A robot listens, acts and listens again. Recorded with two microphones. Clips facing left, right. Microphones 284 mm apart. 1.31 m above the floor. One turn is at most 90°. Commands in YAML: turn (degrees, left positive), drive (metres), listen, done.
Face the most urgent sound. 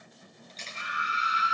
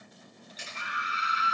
turn: -65
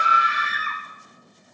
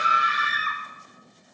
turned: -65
turn: -50
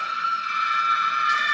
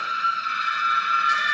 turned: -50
done: "Found it: a scream, straight ahead."